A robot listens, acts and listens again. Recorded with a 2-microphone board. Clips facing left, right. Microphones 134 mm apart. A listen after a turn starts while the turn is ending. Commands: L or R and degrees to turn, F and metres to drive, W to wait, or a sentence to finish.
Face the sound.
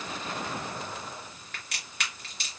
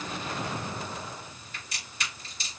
L75
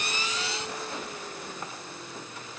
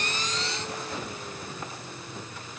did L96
W
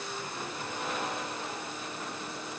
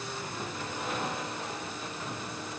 I heard a crack, but can't make it out now. It was about 10° left or 25° right.